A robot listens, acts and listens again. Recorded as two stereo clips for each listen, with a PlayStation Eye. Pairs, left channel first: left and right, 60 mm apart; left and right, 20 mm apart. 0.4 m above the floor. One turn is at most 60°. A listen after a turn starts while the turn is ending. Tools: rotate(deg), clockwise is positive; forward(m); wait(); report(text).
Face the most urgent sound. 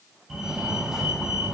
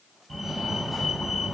rotate(30)
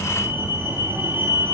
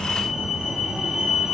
rotate(60)
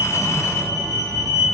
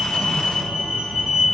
rotate(60)
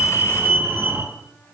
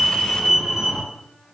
rotate(40)
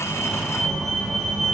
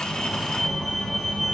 report("Facing the fire alarm, over 4 m away.")